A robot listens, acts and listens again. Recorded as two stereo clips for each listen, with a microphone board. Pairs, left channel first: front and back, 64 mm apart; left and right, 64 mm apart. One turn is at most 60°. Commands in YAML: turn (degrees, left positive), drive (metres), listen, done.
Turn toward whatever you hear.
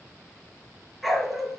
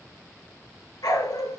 turn: 60
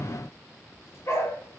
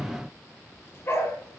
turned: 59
turn: 40
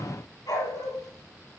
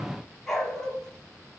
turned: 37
done: "Facing the dog barking."